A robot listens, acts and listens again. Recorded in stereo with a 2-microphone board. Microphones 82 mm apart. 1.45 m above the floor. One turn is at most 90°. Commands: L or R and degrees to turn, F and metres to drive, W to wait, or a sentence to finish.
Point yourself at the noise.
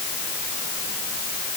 W
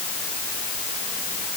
W
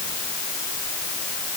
I can't make out anything to turn to.